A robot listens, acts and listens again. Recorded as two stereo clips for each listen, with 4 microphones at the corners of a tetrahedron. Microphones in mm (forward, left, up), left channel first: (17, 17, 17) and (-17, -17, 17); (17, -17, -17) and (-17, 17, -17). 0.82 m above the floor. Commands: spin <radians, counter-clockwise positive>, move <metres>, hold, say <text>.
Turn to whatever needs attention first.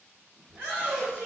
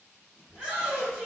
spin -2.36
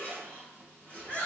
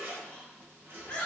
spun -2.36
spin 0.44
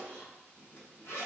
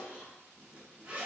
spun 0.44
hold
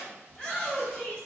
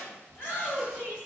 say Facing the shout.